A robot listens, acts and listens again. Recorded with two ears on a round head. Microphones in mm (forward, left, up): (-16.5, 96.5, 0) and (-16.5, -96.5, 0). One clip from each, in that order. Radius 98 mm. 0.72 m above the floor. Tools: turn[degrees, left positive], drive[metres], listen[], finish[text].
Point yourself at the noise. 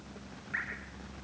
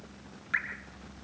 Action: turn[-90]
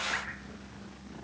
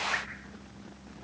Action: listen[]
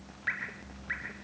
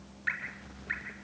Action: finish[Facing the dripping.]